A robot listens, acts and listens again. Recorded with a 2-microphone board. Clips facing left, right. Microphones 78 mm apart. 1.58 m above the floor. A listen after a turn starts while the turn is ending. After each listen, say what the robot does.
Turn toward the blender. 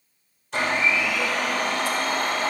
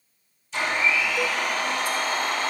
Turn 60° left.
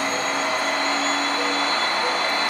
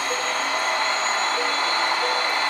Found it: a blender, straight ahead.